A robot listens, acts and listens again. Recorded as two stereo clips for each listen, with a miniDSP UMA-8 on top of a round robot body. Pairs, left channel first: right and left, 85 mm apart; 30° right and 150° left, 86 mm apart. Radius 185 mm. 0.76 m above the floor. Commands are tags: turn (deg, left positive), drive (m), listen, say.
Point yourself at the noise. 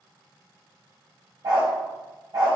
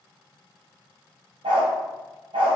<turn deg="140"/>
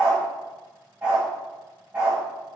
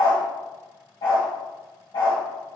<turn deg="15"/>
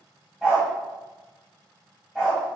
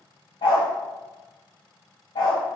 <say>Facing the dog barking, under 1 m away.</say>